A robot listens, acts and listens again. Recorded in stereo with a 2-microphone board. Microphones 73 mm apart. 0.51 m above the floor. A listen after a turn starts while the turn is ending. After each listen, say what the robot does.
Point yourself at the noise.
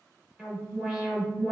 Turn 30° right.
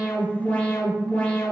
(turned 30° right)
Turn 20° left.
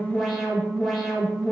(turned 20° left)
Facing the alarm, under 1 m away.